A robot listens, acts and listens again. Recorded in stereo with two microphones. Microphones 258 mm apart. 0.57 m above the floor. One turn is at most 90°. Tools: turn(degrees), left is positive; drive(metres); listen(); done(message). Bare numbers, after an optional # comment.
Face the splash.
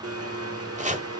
listen()
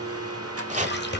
# The splash: about 45° left or 135° left.
turn(45)
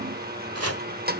listen()
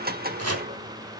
done("I heard a splash, but can't make it out now. It was about straight ahead or 90° left.")